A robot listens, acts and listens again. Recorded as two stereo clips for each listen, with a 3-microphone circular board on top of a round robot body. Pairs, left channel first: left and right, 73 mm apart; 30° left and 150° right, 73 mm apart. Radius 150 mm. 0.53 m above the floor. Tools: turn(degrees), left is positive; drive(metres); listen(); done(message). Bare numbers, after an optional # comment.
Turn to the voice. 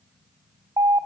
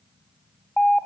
listen()
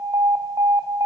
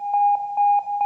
listen()
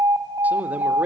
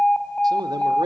# The man speaking: 160° right.
turn(-160)
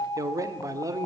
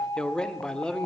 # The man speaking is now 45° right.
turn(-45)
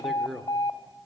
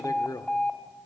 done("Facing the man speaking, 1 to 2 m away.")